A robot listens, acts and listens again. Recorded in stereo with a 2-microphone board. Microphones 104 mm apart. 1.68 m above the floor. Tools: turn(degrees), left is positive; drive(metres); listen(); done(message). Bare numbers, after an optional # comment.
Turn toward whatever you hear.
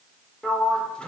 turn(30)
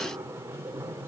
# So it is at 25° right.
turn(-25)
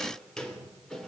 done("Facing the sliding door.")